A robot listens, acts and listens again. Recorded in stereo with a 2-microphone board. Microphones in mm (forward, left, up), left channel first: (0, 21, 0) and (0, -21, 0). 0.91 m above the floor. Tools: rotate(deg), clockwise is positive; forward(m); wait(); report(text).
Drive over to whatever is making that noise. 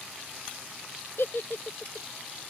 rotate(-75)
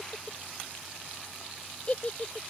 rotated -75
rotate(-30)
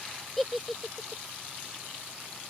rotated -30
forward(1.0)
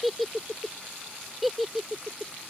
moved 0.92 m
forward(1.0)
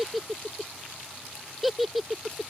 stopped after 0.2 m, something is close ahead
report("I am next to the giggle.")